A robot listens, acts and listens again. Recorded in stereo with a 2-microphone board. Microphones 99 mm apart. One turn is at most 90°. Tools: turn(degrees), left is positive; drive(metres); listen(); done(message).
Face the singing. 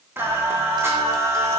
turn(degrees=-30)
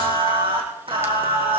turn(degrees=-90)
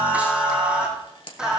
done("Found it: singing, straight ahead.")